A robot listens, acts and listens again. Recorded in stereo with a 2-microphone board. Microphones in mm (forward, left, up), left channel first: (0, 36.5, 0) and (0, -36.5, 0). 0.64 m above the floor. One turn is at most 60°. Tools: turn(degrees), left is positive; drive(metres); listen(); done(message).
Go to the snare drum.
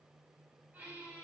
listen()
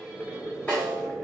turn(degrees=15)
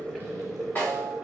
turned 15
turn(degrees=60)
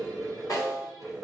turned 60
turn(degrees=60)
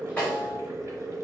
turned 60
turn(degrees=25)
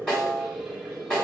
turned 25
turn(degrees=10)
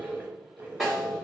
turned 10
drive(metres=1.0)
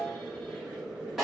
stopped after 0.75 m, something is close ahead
done("Arrived at the snare drum, straight ahead.")